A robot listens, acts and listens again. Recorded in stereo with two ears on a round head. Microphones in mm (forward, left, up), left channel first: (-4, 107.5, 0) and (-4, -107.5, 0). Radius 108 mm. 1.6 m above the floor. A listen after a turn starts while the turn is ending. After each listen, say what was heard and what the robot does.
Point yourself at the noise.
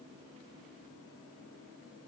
Keep listening.
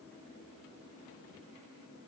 Keep listening.
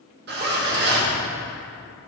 The zipper: about 45° right or 135° right. Turn 45° right.
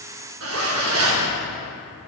So it is at 85° right. Turn 85° right.
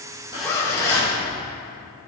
The zipper is now 15° left. Turn 15° left.
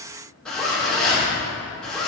Facing the zipper, 1 to 2 m away.